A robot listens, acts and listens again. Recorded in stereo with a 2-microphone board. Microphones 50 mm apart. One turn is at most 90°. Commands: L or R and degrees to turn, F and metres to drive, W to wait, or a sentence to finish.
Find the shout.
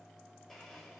W
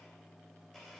W
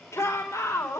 L90
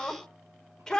L10
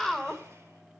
Facing the shout.